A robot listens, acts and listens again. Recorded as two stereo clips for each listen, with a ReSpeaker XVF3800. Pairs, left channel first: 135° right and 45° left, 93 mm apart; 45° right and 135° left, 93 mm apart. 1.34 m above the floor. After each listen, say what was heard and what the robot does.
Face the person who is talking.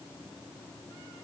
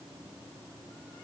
Keep listening.
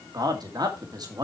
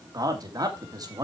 The man speaking: 85° left. Turn 85° left.
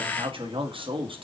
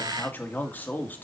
The man speaking is now 25° left. Turn 25° left.
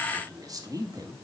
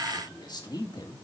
Found it: a man speaking, straight ahead.